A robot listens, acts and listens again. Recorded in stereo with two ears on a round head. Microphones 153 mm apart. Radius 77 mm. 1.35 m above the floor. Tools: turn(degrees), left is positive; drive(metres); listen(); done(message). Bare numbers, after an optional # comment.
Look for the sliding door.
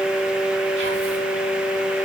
listen()
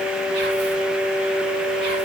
listen()
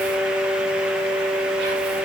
done("I can't make out a sliding door to turn to.")